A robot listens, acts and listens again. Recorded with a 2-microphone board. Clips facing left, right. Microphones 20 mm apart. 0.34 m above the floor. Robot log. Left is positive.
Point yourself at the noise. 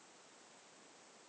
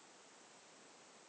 cmd idle
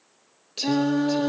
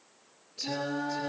cmd yaw +90
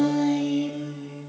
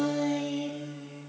end: Facing the singing.